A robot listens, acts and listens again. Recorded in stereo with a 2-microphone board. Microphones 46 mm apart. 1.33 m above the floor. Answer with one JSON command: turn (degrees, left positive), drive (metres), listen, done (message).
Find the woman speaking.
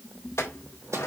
{"listen": true}
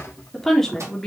{"turn": 30}
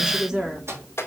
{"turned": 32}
{"turn": -15}
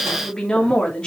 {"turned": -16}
{"turn": 20}
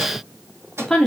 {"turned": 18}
{"turn": 10}
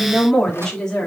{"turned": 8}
{"turn": 15}
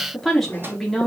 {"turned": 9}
{"done": "Facing the woman speaking, 2 to 4 m away."}